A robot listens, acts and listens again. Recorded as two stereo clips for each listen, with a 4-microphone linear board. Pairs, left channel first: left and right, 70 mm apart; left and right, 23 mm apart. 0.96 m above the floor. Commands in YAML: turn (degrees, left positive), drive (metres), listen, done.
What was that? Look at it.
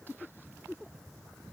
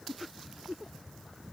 listen: true
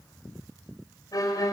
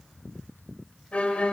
turn: 60
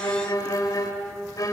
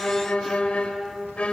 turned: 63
turn: 55
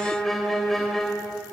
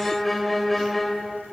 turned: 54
done: "Facing the violin."